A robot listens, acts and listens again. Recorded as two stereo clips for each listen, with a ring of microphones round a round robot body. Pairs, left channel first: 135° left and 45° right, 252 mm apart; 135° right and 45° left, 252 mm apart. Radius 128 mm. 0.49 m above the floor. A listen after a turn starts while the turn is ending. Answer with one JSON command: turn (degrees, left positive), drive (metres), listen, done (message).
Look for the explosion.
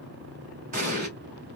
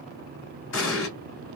{"turn": -105}
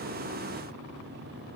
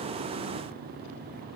{"done": "I heard an explosion from this way, but can't make it out now."}